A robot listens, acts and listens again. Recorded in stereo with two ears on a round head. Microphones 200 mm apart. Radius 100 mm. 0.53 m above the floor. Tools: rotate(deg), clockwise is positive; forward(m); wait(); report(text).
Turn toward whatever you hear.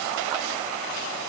wait()
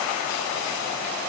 wait()
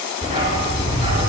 rotate(25)
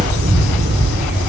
rotate(125)
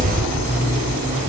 rotate(30)
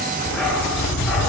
report("Facing the dog barking.")